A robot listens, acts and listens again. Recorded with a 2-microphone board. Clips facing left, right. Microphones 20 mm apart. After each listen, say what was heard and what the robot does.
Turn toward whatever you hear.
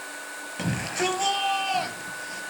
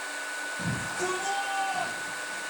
The shout: about 65° left or 115° left. Turn 65° left.
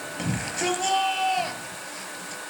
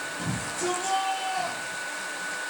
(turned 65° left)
So it is at 50° left. Turn 50° left.
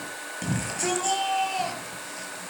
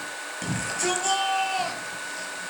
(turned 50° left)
Found it: a shout, straight ahead.